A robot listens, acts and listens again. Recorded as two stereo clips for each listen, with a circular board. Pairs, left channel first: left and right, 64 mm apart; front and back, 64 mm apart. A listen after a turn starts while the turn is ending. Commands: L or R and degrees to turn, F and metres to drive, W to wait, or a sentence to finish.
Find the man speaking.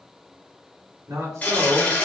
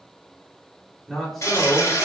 R80
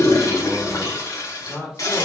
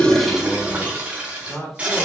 L40
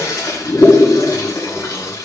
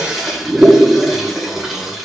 W
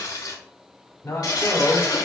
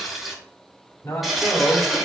L45
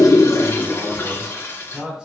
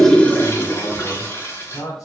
R10
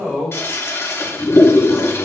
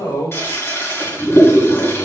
Found it: a man speaking, straight ahead.